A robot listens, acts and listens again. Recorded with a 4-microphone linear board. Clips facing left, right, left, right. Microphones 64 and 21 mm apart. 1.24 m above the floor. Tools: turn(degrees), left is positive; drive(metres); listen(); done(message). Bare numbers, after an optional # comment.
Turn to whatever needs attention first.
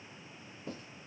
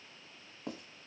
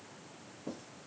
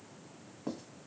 listen()
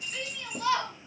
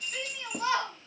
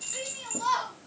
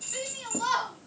# The shout: about 20° right or 160° right.
turn(-20)
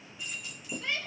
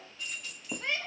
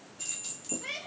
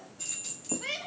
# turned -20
# So it is at 140° right.
turn(-140)
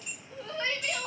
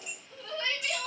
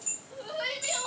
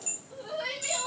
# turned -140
# The shout is now 25° left.
turn(25)
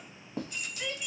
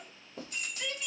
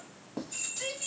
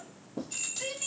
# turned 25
done("Found it: a shout, straight ahead.")